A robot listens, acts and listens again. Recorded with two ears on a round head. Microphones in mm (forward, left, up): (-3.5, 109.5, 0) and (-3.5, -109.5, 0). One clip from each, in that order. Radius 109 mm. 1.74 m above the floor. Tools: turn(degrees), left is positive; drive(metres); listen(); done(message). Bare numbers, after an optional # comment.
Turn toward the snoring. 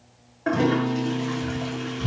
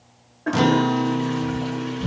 # The snoring: about 40° left or 140° left.
turn(40)
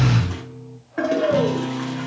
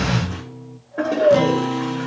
# So it is at 95° left.
turn(95)
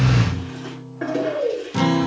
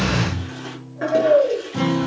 # The snoring is now 45° left.
turn(45)
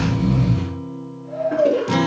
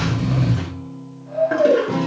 # The snoring is now 15° right.
turn(-15)
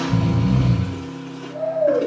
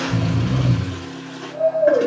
done("Found it: snoring, straight ahead, over 4 m away.")